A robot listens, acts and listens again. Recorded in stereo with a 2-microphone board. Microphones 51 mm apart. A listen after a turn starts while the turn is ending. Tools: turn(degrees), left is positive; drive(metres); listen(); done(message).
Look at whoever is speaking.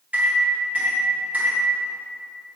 listen()
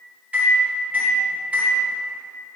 listen()
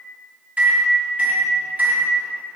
done("I can't make out anyone speaking, only a microwave.")